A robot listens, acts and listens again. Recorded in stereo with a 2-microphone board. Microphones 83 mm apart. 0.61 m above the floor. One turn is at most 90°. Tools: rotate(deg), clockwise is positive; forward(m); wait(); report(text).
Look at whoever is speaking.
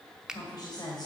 rotate(-55)
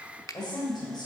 rotate(-65)
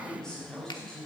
report("Found it: a woman speaking, straight ahead, 2 to 4 m away.")